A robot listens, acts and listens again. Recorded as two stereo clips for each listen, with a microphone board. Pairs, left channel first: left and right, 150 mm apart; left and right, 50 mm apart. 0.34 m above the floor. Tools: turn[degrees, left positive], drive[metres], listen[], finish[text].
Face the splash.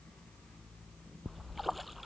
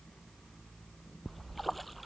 Action: turn[30]
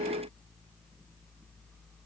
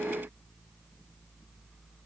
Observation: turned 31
Action: listen[]
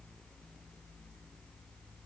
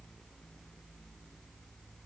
Action: finish[I heard a splash, but can't make it out now. It was about 30° right or 150° left.]